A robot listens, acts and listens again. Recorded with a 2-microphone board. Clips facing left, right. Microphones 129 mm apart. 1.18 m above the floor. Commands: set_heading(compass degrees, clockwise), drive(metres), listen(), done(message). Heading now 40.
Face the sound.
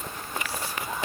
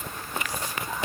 listen()
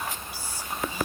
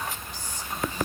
set_heading(10)
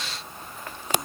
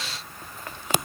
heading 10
listen()
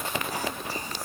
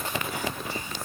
listen()
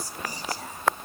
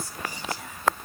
set_heading(225)
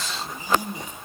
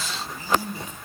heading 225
set_heading(205)
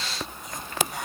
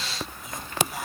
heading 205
done("Found it: whispering, straight ahead.")